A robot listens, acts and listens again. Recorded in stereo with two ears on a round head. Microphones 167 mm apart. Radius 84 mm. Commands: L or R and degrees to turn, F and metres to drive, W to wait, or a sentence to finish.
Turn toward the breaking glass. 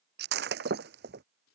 R60
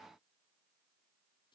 W
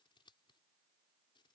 I heard breaking glass, but can't make it out now. It was about straight ahead or 60° right.